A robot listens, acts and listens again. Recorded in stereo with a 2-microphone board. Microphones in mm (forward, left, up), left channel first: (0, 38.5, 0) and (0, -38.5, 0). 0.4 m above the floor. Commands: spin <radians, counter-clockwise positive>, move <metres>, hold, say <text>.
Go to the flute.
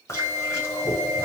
spin -0.61
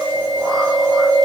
hold
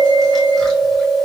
hold
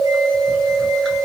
say I heard a flute, but can't make it out now. It was about straight ahead or 110° right. I did not reach it.